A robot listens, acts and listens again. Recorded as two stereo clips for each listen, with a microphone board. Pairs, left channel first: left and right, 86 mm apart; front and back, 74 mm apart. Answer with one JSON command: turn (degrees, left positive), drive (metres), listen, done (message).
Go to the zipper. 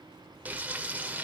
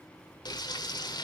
{"listen": true}
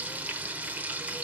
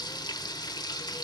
{"listen": true}
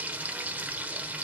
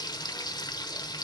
{"done": "I can't make out a zipper, only frying."}